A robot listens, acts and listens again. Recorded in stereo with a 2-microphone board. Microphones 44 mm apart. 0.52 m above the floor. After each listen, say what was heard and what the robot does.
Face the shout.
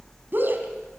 The shout: about 50° right or 130° right. Turn 50° right.
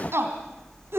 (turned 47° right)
So it is at 80° right. Turn 80° right.
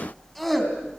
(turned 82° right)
Found it: a shout, straight ahead.